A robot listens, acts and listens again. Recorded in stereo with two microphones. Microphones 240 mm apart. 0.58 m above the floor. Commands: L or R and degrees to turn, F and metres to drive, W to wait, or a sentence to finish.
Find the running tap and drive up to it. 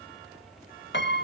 W
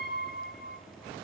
W
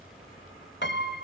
I can't make out a running tap to turn to.